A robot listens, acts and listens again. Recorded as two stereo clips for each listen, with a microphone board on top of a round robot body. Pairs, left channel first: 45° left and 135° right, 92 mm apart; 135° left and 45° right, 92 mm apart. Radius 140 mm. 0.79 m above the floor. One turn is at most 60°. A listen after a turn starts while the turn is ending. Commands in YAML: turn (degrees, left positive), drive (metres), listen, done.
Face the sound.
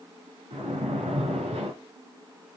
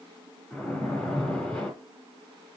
turn: -60
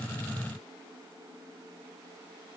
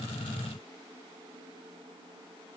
turn: -60
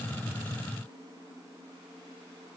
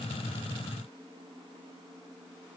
turn: -20
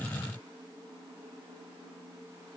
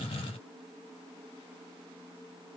done: "Facing where the splash came from. I can't hear it now."